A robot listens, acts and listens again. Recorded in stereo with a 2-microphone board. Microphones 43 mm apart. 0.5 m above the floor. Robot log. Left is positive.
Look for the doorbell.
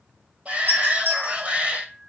note: The doorbell: about 60° right or 120° right.
cmd yaw -60
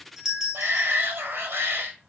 note: So it is at 20° right.
cmd yaw -20
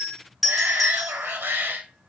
end: Facing the doorbell.